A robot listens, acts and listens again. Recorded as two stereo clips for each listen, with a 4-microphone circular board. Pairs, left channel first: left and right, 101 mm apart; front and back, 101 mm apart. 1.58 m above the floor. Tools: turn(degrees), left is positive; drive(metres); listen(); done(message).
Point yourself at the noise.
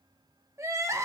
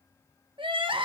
turn(degrees=-150)
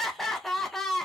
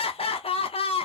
done("Facing the crying, under 1 m away.")